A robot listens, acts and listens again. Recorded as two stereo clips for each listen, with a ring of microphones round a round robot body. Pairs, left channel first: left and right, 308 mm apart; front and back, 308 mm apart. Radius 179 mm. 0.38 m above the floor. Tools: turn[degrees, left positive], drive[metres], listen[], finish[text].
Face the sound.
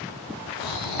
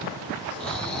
Thought: The snoring: 90° left.
Action: turn[90]
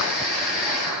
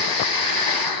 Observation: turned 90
Action: finish[Found it: snoring, straight ahead.]